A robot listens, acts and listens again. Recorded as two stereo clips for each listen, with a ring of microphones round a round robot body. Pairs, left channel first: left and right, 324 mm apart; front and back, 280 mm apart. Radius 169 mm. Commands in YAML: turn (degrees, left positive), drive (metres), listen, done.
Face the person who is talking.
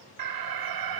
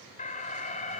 listen: true
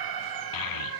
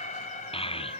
turn: 70
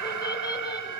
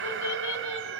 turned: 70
listen: true
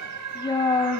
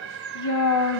turn: 10
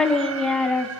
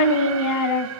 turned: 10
done: "Found it: a child speaking, straight ahead."